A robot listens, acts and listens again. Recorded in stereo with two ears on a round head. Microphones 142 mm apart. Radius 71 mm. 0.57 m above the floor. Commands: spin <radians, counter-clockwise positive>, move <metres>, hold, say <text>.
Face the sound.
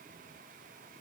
hold
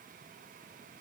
hold
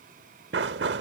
spin -1.57
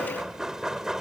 say Found it: knocking, straight ahead.